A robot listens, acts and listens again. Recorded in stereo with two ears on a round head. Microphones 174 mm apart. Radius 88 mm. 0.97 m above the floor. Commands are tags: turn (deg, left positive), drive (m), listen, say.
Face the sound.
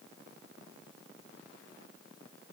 <listen/>
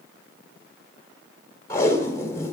<turn deg="15"/>
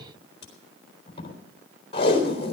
<turn deg="150"/>
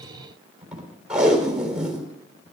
<say>Facing the tape being pulled, 2 to 4 m away.</say>